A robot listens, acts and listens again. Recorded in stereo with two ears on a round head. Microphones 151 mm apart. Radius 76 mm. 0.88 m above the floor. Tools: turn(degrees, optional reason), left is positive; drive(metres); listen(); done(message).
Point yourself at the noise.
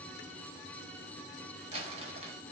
turn(degrees=-35, reason="The crumpling: about 35° right or 145° right.")
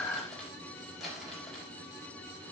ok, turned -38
done("Found it: crumpling, straight ahead.")